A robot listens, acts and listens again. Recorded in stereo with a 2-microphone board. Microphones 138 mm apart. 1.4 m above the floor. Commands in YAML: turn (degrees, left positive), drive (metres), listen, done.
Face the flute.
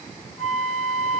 turn: 20
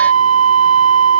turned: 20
turn: 140
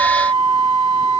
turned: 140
turn: 35
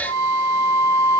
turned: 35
done: "Facing the flute, 1 to 2 m away."